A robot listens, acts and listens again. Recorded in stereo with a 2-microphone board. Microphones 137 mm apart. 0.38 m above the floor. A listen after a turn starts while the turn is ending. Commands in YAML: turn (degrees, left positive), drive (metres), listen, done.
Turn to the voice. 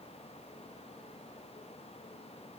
listen: true
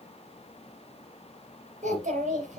turn: -75
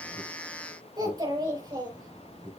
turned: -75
turn: -30
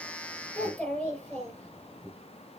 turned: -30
turn: 10
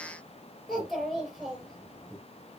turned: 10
done: "Facing the child speaking."